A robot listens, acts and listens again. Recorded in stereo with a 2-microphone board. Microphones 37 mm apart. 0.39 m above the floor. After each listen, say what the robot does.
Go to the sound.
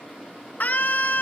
Turn 55° left.
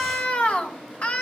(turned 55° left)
Turn 50° left.
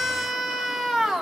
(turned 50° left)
Drive 1.0 m forward.
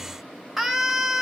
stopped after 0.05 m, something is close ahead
Blocked. The scream is further on, straight ahead.